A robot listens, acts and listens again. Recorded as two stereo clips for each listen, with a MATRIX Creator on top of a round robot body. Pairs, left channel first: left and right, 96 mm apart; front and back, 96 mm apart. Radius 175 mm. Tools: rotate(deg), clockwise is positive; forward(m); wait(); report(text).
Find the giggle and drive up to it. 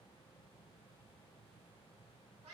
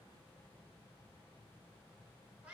wait()
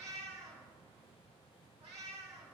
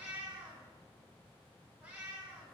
wait()
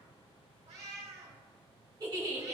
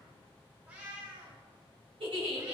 rotate(145)
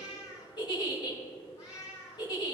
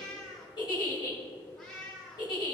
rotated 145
rotate(-45)
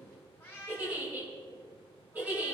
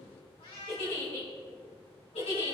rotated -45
rotate(20)
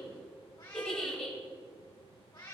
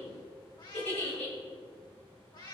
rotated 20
forward(1.0)
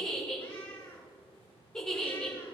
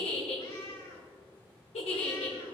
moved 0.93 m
rotate(-10)
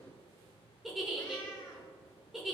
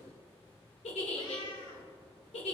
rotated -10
forward(1.0)
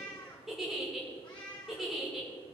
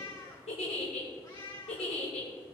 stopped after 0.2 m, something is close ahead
report("Arrived at the giggle, straight ahead.")